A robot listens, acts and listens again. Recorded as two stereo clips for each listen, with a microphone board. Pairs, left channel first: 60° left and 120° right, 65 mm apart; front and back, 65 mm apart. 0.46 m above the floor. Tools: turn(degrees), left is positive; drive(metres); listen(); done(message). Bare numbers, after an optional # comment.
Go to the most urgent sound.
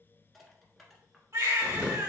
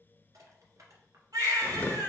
# The baby crying: 155° right.
turn(-155)
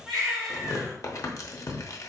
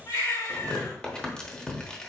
# The baby crying is now 30° right.
turn(-30)
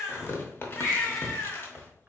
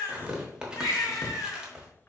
drive(1.0)
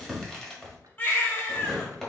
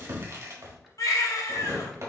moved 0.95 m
drive(1.0)
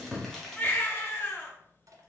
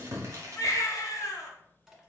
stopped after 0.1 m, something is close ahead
done("I am next to the baby crying.")